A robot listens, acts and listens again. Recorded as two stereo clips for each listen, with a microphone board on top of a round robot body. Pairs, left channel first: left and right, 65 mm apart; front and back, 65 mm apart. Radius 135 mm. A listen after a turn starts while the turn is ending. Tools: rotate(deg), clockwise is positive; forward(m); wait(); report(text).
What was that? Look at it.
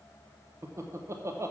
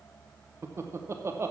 rotate(135)
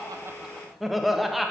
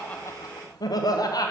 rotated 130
report("Facing the laughter.")